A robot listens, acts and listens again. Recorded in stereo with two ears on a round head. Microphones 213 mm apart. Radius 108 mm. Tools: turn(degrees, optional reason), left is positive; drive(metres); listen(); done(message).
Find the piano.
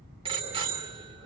listen()
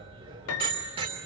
turn(degrees=70, reason="The piano: about 70° left or 110° left.")
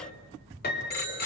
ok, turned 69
turn(degrees=40, reason="So it is at 40° left.")
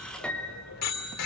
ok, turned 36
done("Found it: a piano, straight ahead, 2 to 4 m away.")